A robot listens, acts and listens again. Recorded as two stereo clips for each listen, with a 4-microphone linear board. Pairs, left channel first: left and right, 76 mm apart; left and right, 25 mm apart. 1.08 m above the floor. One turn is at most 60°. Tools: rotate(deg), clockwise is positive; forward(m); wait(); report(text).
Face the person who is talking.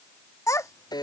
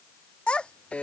rotate(-45)
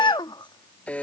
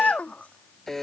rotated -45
rotate(-60)
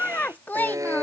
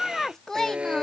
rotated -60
rotate(-25)
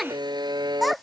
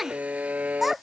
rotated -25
report("Facing the child speaking.")